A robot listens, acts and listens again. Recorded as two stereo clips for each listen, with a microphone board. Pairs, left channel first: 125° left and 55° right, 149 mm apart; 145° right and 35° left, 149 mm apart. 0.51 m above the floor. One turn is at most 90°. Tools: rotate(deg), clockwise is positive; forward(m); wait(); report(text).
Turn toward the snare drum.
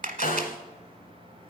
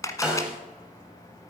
rotate(-90)
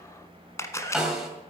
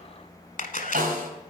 rotate(-30)
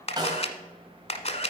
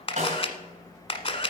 report("Facing the snare drum, 2 to 4 m away.")